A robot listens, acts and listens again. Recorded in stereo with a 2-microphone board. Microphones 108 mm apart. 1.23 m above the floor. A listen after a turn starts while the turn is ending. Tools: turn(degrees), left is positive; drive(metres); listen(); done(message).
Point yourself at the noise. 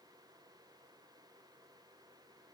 listen()
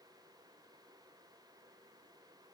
listen()
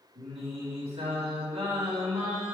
turn(degrees=-65)
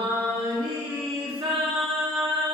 turn(degrees=-50)
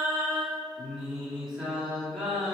done("Facing the singing, 2 to 4 m away.")